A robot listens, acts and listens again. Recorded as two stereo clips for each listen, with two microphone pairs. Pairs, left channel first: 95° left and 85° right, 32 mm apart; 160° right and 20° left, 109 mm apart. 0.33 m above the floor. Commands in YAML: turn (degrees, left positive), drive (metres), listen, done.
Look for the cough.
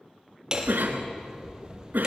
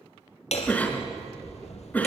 turn: -85
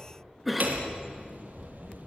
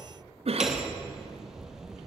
done: "Facing the cough, 2 to 4 m away."